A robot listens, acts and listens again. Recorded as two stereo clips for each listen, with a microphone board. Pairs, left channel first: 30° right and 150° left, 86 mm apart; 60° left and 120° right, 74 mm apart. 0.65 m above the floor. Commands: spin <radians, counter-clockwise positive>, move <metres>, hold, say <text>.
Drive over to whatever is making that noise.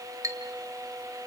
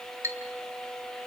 spin -2.88
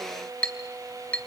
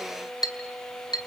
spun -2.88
spin 0.79
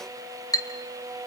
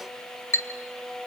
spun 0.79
spin 0.17
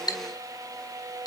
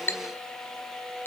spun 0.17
move 1.0
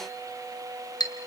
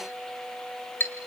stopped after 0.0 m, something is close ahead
say Something is in my way. I am facing the clink but have not reached it.